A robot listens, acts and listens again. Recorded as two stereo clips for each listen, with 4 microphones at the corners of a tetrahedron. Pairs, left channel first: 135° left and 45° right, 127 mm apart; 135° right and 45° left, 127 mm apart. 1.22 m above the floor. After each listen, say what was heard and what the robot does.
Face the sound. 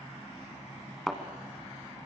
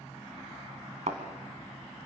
The thud: 50° left. Turn 50° left.
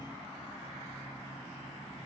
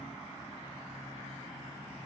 I heard a thud from this way, but can't make it out now.